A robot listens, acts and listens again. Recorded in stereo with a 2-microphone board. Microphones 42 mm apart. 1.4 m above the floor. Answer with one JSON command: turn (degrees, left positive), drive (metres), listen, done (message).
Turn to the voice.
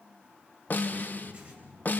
{"turn": -70}
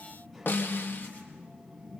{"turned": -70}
{"done": "Found it: a child speaking, straight ahead."}